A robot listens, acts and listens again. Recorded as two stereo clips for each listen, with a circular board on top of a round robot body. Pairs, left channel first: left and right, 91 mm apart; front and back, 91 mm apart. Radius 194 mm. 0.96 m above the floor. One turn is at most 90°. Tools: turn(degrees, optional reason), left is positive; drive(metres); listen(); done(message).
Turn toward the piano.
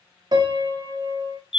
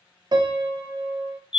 turn(degrees=-90, reason="The piano: 135° right.")
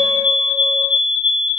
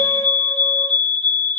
turn(degrees=-45, reason="Nothing new. It was at 45° right.")
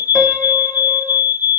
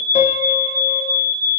listen()
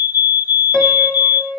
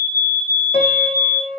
done("Facing the piano.")